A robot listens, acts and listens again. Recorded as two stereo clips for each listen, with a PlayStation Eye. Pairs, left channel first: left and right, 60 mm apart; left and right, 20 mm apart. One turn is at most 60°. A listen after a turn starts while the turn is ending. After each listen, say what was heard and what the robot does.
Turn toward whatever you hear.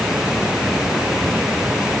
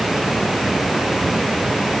Keep listening.
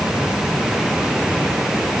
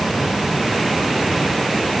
Keep listening.
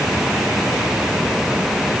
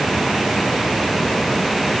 I can't make out anything to turn to.